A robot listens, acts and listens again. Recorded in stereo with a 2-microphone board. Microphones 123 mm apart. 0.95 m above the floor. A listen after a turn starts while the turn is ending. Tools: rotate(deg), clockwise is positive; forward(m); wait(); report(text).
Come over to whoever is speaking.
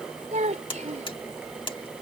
rotate(75)
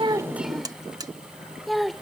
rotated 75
forward(1.0)
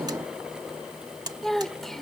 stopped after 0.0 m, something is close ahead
report("Blocked. The child speaking is further on, straight ahead.")